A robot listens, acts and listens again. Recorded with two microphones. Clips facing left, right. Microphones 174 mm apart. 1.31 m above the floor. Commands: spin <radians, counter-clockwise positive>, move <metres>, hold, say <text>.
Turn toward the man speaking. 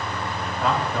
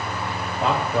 spin -0.52
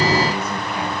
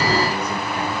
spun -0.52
hold
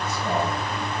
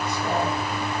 hold
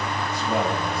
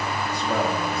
spin -2.01
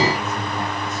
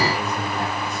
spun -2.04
hold
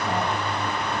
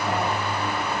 hold
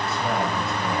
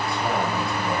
say I heard a man speaking from this way, but can't make it out now.